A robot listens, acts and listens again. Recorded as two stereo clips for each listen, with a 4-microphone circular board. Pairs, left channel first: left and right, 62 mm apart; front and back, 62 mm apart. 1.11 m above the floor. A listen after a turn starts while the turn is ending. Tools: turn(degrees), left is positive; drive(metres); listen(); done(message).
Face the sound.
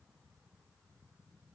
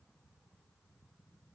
listen()
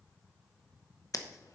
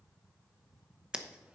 turn(degrees=105)
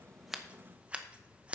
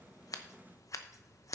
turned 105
turn(degrees=-25)
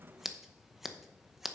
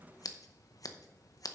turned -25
done("Facing the scissors.")